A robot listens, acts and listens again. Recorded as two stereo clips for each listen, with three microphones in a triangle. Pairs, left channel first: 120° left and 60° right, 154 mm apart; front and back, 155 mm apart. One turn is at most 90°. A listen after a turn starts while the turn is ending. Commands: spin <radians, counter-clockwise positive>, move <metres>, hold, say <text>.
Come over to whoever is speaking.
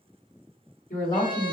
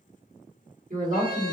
spin 1.57
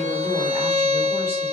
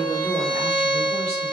spin 1.05
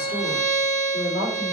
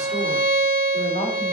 move 1.0
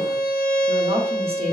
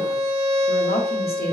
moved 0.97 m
move 1.0
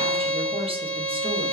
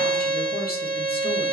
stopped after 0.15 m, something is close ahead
hold
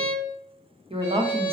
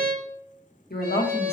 say I am next to the woman speaking.